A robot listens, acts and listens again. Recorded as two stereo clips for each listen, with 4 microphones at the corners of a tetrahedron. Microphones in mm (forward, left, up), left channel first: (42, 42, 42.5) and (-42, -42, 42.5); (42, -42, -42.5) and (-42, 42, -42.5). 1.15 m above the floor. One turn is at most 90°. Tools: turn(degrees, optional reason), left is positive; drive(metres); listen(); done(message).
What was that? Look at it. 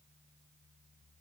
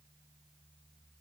listen()
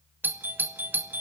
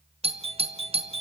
turn(degrees=90, reason="The doorbell: 155° left.")
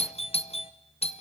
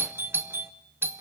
turn(degrees=65, reason="The doorbell is now 65° left.")
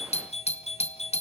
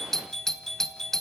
turn(degrees=40, reason="The doorbell is now 40° left.")
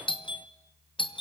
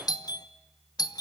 done("Facing the doorbell.")